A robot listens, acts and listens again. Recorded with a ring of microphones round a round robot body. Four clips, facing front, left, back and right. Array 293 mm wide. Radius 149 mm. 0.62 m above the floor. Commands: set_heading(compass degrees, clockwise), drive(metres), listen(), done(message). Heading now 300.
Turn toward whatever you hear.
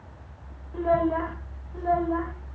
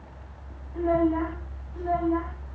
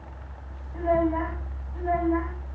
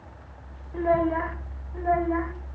set_heading(340)
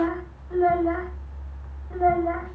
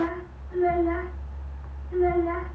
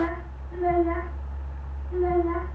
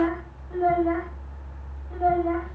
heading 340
set_heading(0)
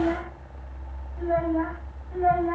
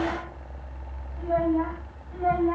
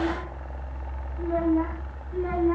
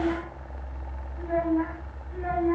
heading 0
set_heading(345)
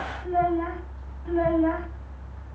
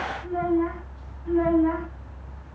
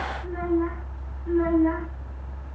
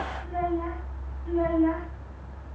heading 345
done("Found it: a child speaking, straight ahead.")